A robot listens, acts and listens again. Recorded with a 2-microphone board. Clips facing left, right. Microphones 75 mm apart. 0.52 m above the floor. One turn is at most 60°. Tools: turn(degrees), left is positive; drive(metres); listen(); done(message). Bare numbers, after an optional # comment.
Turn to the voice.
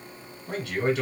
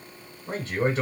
# The man speaking: about 40° right or 140° right.
turn(-40)
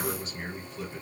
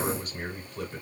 # So it is at 90° right.
turn(-60)
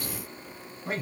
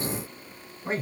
# The man speaking is now 40° right.
turn(-40)
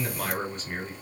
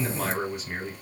done("Facing the man speaking.")